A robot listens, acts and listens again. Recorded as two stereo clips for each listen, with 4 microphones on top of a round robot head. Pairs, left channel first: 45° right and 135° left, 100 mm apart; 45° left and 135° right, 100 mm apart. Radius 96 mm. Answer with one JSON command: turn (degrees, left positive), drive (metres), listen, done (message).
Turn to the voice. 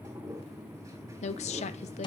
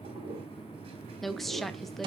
{"turn": -45}
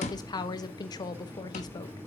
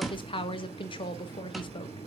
{"done": "Found it: a woman speaking, straight ahead."}